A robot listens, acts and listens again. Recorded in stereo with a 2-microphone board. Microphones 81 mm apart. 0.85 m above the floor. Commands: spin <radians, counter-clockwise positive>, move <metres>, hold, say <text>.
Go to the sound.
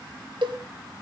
spin -1.57
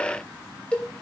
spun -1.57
spin 0.26
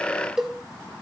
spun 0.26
move 1.0
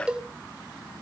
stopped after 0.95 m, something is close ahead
spin -0.26
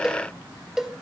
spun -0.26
say Arrived at the cowbell, straight ahead.